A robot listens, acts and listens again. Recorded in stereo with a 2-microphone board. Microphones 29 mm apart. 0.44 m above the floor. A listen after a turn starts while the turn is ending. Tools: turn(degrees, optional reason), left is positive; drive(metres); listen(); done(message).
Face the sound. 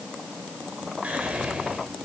turn(degrees=-55, reason="The whispering: about 55° right or 125° right.")
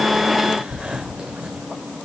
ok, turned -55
turn(degrees=-45, reason="So it is at 45° right.")
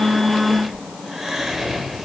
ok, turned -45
turn(degrees=-10, reason="The whispering is now 10° right.")
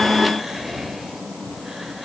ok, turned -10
done("Found it: whispering, straight ahead.")